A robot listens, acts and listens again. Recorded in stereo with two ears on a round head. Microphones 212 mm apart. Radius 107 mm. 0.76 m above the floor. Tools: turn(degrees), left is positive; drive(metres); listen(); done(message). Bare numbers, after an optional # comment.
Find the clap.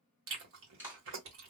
turn(-30)
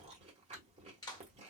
# So it is at 20° left.
turn(20)
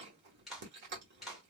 done("Found it: a clap, straight ahead.")